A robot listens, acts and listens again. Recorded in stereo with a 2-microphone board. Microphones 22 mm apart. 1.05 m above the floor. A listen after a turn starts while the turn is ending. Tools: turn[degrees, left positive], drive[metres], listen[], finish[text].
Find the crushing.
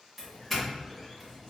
Action: listen[]
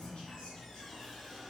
Action: listen[]
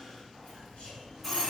Action: finish[I can't make out crushing, only a doorbell.]